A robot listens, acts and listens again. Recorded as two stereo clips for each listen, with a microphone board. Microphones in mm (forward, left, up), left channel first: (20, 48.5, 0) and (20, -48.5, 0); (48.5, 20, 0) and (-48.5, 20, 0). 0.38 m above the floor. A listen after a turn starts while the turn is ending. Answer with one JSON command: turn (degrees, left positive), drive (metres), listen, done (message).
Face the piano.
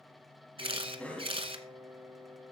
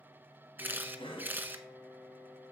{"turn": -70}
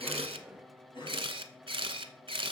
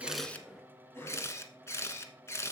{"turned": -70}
{"listen": true}
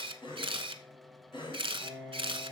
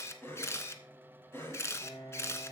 {"turn": -20}
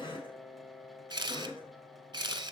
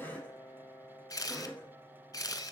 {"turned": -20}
{"done": "Facing the piano."}